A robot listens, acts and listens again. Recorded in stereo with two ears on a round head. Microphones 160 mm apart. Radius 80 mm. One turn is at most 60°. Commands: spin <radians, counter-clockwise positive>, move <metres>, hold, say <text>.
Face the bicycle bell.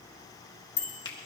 spin 0.61
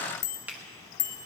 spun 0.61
spin 1.05
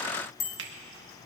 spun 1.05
spin 0.79
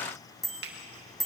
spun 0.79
say Found it: a bicycle bell, straight ahead.